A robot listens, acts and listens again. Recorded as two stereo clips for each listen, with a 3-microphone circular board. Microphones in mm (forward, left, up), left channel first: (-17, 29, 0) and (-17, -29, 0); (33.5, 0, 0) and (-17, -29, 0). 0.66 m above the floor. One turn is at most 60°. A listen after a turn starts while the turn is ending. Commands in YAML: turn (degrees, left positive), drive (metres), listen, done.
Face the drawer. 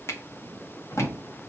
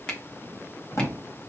turn: 60
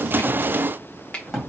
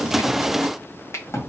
turn: -10
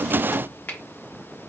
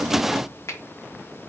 listen: true
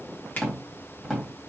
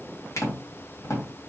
done: "Found it: a drawer, straight ahead, 2 to 4 m away."